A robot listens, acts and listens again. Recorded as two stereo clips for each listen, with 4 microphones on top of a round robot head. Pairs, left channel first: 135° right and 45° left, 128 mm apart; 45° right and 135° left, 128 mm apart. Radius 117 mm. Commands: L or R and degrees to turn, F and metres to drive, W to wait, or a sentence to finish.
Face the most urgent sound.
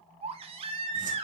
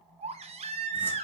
L90
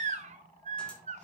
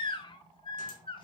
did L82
L10
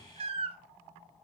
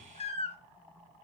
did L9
Facing the baby crying, 1 to 2 m away.